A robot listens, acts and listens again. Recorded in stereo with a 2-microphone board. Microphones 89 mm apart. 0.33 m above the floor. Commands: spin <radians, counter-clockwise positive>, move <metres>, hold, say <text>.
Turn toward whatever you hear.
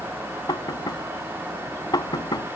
spin 0.87
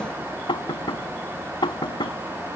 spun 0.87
spin 1.22
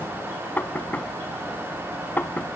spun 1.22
spin 0.35
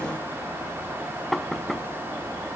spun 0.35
say Found it: knocking, straight ahead.